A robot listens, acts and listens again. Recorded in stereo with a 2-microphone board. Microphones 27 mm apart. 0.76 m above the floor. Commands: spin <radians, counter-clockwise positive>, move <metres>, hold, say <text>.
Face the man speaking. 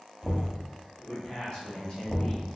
spin 0.61
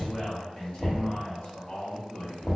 spin 0.79
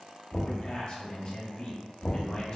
spin 0.61
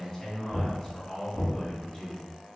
spin 0.17
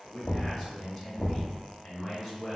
say Found it: a man speaking, straight ahead.